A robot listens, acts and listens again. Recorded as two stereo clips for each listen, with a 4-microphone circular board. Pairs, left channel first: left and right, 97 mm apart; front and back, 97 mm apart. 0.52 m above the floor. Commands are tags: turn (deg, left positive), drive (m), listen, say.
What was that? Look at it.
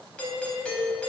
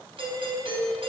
<turn deg="170"/>
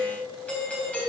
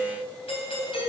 <turn deg="15"/>
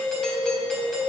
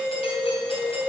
<say>Facing the doorbell, 2 to 4 m away.</say>